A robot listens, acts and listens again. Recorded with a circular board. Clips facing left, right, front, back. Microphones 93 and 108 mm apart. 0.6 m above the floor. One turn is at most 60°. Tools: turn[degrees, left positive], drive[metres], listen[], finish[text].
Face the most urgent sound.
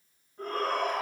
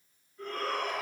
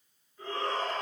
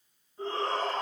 Thought: The shout: 125° left.
Action: turn[60]
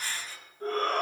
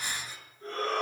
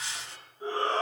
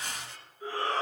Thought: The shout is now 60° left.
Action: turn[60]
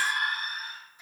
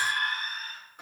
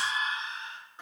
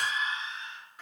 Thought: The shout is now 15° left.
Action: turn[15]
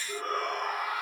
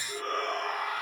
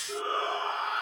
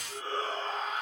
Action: finish[Facing the shout.]